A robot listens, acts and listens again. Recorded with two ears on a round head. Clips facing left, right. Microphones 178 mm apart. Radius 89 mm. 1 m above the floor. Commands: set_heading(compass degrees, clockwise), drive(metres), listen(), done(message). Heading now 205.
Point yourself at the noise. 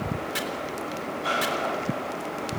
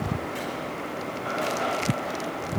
listen()
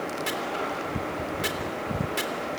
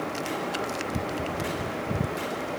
set_heading(115)
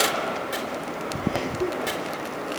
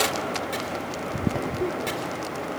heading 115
listen()
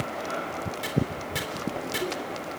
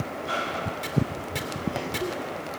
listen()
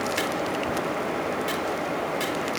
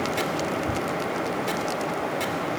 done("Facing where the chopping came from. I can't hear it now.")